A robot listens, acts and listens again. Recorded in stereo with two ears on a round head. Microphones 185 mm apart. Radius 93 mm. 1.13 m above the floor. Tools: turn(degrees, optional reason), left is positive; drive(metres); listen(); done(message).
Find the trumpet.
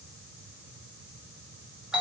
listen()
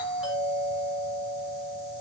listen()
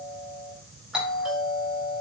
done("I can't make out a trumpet to turn to.")